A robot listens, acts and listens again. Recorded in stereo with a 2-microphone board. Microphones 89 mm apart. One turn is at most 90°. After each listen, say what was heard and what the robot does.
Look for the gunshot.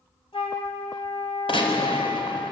The gunshot: about 70° left or 110° left. Turn 70° left.
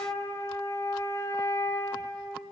Keep listening.
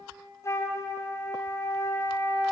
I heard a gunshot, but can't make it out now. It was about straight ahead or 40° left.